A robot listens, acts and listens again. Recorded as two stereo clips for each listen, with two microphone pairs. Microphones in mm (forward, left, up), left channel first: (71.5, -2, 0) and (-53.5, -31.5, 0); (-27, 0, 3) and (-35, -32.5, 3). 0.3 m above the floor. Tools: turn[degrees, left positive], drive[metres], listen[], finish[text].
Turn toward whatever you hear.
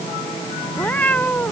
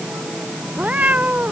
Thought: The cat meowing: 65° right.
Action: turn[-65]
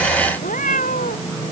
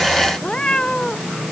Thought: The cat meowing is now 15° left.
Action: turn[15]
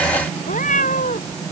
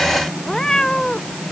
Action: finish[Facing the cat meowing.]